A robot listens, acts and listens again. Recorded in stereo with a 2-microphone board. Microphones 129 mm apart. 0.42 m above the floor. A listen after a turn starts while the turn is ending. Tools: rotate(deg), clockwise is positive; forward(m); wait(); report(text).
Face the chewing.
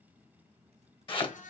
wait()
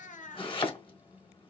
wait()
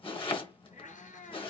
report("I can't make out chewing to turn to.")